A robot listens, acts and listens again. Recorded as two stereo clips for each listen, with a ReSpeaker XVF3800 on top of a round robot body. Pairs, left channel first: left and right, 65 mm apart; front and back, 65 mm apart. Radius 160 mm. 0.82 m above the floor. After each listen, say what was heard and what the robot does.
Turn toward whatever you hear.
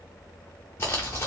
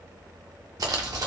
The crumpling: 145° left. Turn 145° left.
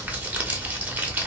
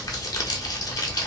The crumpling is now 25° right. Turn 25° right.
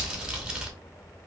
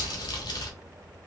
The crumpling is now 10° right. Turn 10° right.
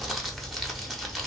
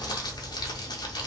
Facing the crumpling.